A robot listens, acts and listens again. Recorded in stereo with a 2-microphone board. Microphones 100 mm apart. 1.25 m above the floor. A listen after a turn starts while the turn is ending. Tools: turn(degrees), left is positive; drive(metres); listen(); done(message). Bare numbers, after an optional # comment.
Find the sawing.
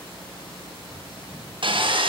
# The sawing: about 60° right or 120° right.
turn(-60)
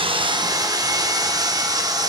# So it is at 45° right.
turn(-45)
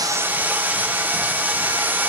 # The sawing is now 20° right.
turn(-20)
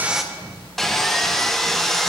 done("Found it: sawing, straight ahead.")